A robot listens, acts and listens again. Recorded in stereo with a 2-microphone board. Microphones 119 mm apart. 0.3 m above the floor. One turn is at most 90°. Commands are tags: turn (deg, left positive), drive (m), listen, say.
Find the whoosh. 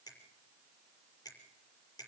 <listen/>
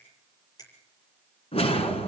<turn deg="55"/>
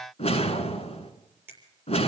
<turn deg="65"/>
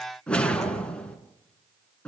<turn deg="10"/>
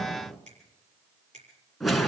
<say>Found it: a whoosh, straight ahead.</say>